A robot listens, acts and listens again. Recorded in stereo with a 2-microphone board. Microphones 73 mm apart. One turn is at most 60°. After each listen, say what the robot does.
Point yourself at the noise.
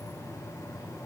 Keep listening.
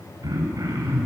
Turn 55° right.
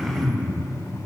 Found it: throat clearing, straight ahead, 2 to 4 m away.